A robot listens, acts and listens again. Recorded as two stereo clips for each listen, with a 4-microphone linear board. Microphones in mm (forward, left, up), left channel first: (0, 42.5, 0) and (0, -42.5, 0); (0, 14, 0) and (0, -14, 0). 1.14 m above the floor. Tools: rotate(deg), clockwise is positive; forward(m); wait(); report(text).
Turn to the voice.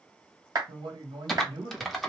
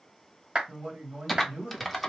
rotate(90)
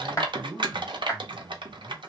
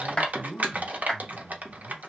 report("Found it: a man speaking, straight ahead.")